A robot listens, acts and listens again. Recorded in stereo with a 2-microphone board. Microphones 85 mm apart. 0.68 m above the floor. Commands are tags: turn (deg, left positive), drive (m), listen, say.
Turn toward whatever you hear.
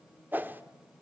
<turn deg="-25"/>
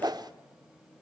<turn deg="-125"/>
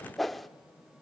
<say>Facing the whoosh, under 1 m away.</say>